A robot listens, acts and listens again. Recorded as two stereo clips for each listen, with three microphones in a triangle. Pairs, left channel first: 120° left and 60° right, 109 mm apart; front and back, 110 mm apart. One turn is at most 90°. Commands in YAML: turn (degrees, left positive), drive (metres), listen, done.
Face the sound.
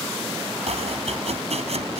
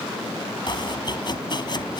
turn: -45
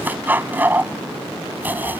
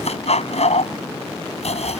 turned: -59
turn: 15
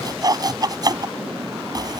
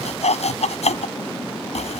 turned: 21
done: "Facing the chopping."